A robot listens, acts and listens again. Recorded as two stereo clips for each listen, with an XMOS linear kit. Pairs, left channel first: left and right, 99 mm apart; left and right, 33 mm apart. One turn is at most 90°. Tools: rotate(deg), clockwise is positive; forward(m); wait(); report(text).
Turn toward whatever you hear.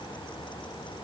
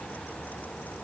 wait()
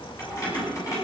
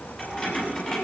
rotate(-35)
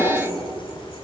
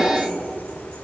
rotate(-90)
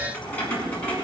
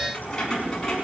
rotate(-15)
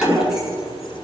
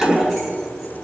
report("Facing the keys jangling.")